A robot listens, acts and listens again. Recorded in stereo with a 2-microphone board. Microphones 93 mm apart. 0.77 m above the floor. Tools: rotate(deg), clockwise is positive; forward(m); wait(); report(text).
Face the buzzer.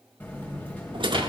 rotate(-20)
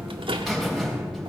report("Facing the buzzer.")